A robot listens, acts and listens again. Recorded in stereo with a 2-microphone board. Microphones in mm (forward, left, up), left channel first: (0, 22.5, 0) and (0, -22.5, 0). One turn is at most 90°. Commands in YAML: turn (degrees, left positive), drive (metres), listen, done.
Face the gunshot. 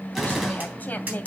turn: -30
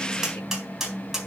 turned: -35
listen: true
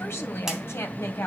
done: "I heard a gunshot, but can't make it out now. It was about 30° left or 140° right."